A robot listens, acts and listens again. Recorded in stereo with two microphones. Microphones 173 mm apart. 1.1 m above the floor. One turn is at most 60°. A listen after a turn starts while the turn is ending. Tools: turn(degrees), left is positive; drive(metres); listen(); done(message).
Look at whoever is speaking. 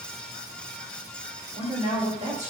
turn(degrees=-40)
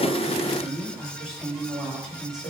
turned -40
done("Found it: a woman speaking, straight ahead.")